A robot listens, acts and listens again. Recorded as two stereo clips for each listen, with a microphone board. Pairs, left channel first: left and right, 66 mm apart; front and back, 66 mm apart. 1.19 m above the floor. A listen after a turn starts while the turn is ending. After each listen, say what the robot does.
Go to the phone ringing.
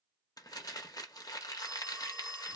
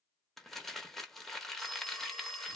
Turn 90° right.
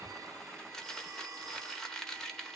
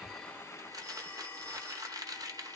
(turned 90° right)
Keep listening.
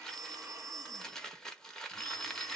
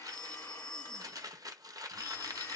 Drive 1.0 m forward.
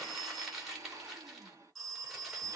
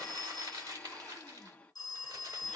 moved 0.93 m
Drive 1.0 m forward.
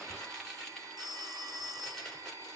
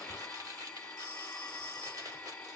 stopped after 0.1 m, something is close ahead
Arrived at the phone ringing, straight ahead.